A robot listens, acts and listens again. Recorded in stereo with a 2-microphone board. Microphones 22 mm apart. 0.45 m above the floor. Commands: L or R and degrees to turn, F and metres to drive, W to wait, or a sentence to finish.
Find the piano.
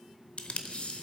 W
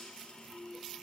W
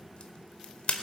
I can't make out a piano to turn to.